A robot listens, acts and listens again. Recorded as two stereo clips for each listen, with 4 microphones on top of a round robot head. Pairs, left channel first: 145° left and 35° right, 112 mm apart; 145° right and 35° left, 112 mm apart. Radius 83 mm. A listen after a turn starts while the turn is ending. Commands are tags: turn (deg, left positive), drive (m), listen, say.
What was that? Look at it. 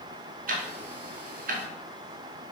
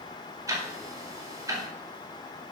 <turn deg="-30"/>
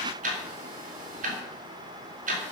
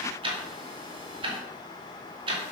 <turn deg="-15"/>
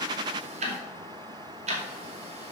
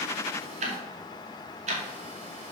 <say>Found it: ticking, straight ahead.</say>